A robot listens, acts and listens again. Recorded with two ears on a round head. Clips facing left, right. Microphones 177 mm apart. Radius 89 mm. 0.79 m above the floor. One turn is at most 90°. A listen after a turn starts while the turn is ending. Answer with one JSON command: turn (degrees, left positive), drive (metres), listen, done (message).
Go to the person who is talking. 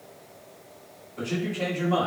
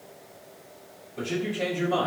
{"turn": -35}
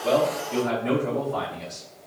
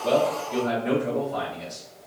{"drive": 1.0}
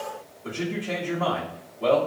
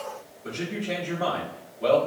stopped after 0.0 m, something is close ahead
{"done": "Something is in my way. I am facing the man speaking but have not reached it."}